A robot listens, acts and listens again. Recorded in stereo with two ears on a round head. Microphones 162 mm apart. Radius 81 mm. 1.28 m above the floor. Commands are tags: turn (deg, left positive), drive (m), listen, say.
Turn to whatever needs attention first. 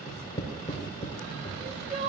<turn deg="-40"/>
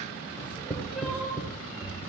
<say>Facing the crying.</say>